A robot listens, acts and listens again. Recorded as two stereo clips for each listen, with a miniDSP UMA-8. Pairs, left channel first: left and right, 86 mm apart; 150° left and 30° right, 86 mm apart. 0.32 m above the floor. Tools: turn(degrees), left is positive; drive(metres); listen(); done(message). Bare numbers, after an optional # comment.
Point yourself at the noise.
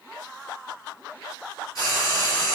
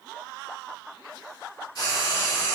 # The frying: 130° left.
turn(130)
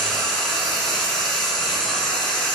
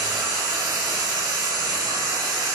done("Found it: frying, straight ahead.")